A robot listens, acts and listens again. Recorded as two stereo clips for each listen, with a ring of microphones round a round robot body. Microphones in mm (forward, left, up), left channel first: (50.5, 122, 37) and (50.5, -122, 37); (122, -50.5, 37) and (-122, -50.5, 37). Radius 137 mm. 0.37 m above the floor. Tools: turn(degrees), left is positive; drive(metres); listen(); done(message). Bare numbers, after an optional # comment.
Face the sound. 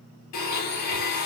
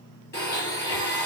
# The blender: 80° left.
turn(80)
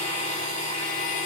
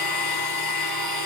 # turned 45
# The blender is now 35° left.
turn(35)
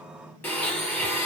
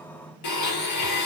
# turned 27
# The blender is now 10° left.
turn(10)
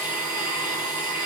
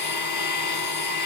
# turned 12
done("Found it: a blender, straight ahead.")